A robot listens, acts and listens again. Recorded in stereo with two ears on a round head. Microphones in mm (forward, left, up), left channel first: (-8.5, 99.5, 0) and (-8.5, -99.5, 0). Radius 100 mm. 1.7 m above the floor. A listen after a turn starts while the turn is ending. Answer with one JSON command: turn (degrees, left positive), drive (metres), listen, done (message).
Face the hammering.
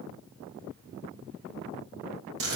{"listen": true}
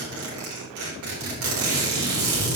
{"listen": true}
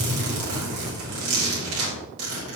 {"done": "I can't make out hammering to turn to."}